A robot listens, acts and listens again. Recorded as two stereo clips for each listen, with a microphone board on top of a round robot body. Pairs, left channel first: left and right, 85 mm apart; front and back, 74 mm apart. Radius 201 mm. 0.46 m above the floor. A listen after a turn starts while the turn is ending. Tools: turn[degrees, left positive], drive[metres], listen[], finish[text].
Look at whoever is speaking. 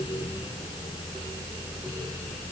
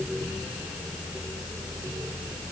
Action: listen[]
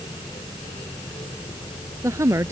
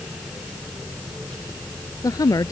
Thought: The woman speaking: 35° right.
Action: turn[-35]
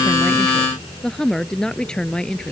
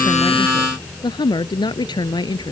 Thought: The woman speaking is now 10° left.
Action: turn[10]
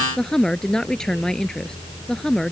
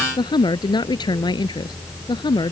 Action: finish[Found it: a woman speaking, straight ahead.]